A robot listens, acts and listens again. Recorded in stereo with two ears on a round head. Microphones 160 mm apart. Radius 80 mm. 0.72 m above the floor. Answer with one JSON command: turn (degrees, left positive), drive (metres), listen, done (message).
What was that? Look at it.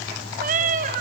{"turn": -50}
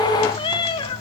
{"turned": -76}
{"turn": 25}
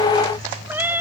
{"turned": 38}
{"turn": -10}
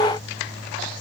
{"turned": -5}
{"listen": true}
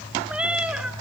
{"done": "Found it: a cat meowing, straight ahead, 1 to 2 m away."}